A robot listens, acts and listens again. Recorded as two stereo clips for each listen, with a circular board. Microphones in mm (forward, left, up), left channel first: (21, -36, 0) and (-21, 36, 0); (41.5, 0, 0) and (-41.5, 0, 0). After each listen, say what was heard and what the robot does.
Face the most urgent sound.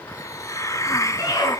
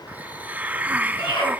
The scream: 15° right. Turn 15° right.
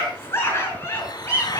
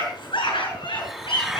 Found it: a scream, straight ahead, over 4 m away.